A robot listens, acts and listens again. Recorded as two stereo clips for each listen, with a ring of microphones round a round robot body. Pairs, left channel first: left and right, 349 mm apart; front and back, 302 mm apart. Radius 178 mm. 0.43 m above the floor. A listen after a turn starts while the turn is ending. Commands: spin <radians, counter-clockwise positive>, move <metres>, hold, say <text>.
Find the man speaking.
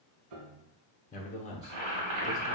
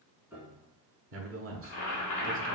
spin 2.71
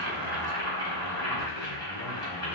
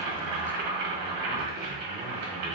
hold
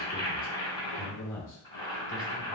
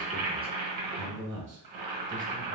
spin 2.44
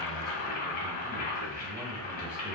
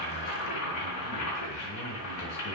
hold
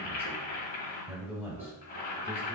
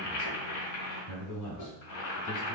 spin -0.17
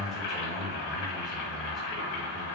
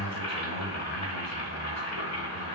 hold
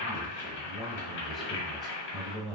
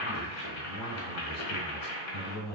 say Facing the man speaking.